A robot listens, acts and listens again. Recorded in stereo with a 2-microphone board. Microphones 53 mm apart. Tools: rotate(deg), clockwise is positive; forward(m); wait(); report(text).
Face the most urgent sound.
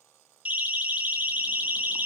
rotate(30)
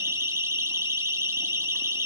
rotate(115)
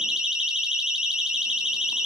rotate(15)
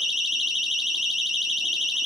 report("Found it: a siren, straight ahead, over 4 m away.")